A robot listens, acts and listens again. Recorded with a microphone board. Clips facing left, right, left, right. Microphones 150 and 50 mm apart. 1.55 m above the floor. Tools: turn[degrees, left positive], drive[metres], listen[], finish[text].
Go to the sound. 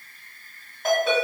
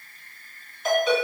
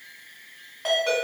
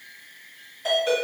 Thought: The ringtone: about 55° left or 125° left.
Action: turn[55]
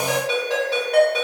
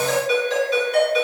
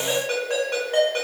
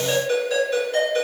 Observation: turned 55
Thought: So it is at 70° left.
Action: turn[70]
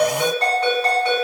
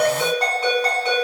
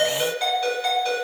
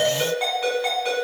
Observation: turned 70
Thought: The ringtone is now 20° right.
Action: turn[-20]
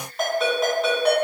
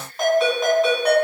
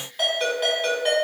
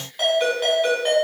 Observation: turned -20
Action: drive[1.0]
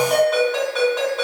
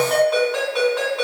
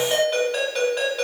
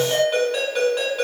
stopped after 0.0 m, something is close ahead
Action: finish[Something is in my way. I am facing the ringtone but have not reached it.]